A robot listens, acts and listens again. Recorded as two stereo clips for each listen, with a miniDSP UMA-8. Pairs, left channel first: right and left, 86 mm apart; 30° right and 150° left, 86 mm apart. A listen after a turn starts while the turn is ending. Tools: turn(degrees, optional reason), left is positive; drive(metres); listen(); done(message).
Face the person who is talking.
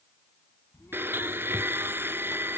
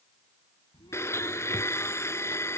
turn(degrees=-35, reason="The child speaking: 35° right.")
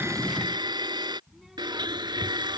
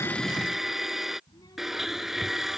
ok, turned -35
done("Facing the child speaking.")